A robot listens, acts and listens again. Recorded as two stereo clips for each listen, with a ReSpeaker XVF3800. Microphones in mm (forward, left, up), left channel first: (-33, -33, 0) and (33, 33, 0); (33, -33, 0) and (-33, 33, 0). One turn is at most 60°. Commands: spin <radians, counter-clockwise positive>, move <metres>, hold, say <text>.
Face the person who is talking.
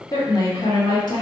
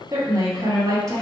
spin -1.05
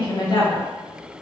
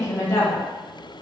spin -1.05
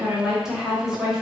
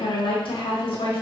spin -0.70
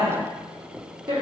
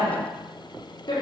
say Found it: a woman speaking, straight ahead, under 1 m away.